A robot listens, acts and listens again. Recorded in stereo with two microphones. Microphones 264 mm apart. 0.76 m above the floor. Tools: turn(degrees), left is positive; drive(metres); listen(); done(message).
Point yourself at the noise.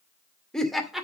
turn(degrees=30)
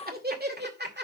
turn(degrees=-40)
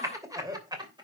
turn(degrees=-15)
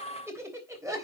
turn(degrees=-10)
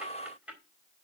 done("Facing the laughter.")